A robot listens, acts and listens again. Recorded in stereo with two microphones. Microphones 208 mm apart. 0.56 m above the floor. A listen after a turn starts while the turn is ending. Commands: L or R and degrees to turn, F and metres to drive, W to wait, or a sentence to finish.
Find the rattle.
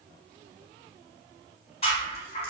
L30
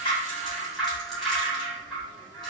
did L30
Found it: a rattle, straight ahead, 1 to 2 m away.